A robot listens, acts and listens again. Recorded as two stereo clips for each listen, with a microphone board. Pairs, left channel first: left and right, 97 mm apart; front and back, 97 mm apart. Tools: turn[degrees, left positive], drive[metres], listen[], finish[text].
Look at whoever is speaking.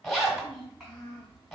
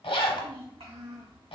Thought: The child speaking: 175° right.
Action: turn[-175]
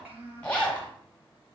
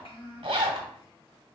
Thought: The child speaking is now 15° right.
Action: turn[-15]
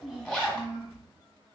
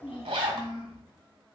Action: finish[Facing the child speaking, 1 to 2 m away.]